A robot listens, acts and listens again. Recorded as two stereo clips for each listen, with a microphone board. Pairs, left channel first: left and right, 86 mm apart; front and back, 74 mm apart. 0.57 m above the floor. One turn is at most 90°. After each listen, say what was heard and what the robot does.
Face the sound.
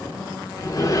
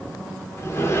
The sliding door: 50° left. Turn 50° left.
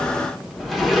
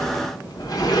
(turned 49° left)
Found it: a sliding door, straight ahead, 1 to 2 m away.